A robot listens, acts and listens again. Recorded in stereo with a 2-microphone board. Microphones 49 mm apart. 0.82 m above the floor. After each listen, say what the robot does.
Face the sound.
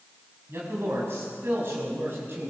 Turn 45° right.
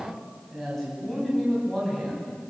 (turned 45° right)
Turn 10° left.
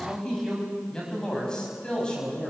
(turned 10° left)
Turn 20° left.
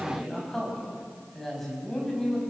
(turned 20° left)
Found it: a man speaking, straight ahead, over 4 m away.